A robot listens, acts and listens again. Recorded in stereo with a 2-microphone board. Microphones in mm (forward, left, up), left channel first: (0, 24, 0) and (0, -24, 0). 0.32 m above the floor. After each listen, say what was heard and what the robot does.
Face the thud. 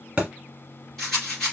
The thud: about 20° right or 160° right. Turn 20° right.
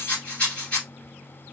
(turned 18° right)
Keep listening.
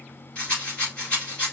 I heard a thud, but can't make it out now. It was about 5° right or 140° right.